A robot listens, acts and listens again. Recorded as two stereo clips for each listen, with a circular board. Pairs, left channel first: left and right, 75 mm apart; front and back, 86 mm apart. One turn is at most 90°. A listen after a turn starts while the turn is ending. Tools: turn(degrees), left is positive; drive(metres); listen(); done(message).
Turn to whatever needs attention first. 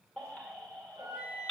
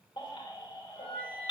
turn(degrees=15)
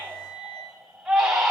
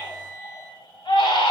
done("Facing the baby crying.")